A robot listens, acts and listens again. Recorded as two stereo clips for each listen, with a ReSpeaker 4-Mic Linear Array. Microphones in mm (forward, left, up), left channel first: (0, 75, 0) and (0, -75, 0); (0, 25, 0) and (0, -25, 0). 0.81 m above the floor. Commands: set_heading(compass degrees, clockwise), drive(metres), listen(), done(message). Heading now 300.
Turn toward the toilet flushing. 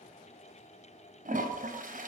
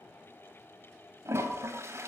set_heading(0)
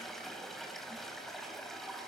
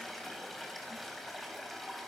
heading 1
done("Found it: a toilet flushing, straight ahead.")